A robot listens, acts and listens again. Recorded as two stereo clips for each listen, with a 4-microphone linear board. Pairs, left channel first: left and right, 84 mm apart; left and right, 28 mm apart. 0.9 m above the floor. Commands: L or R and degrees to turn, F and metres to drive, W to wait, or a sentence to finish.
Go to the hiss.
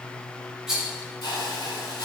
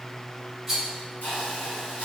L65
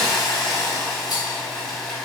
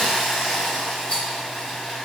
F1.0
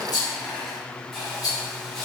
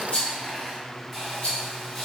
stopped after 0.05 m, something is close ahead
Blocked. The hiss is further on, straight ahead.